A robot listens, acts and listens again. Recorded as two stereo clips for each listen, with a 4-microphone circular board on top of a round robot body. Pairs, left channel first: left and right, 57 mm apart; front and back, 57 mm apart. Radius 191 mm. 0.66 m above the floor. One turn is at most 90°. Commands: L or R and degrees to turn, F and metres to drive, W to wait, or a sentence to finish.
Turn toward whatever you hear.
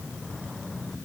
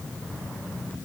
W
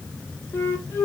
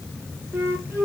L90
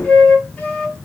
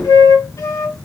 L20
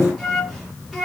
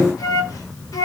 Facing the flute, 1 to 2 m away.